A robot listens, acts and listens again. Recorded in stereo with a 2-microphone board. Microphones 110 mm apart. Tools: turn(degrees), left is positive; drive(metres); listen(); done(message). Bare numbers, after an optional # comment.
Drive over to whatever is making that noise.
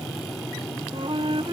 # The flute: about 55° right or 125° right.
turn(-55)
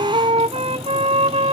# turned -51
# So it is at 75° right.
turn(-75)
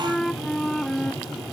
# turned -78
drive(1.0)
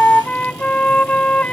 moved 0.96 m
# The flute is now 10° left.
turn(10)
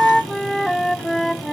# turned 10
drive(1.0)
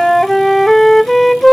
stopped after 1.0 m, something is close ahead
done("I am next to the flute.")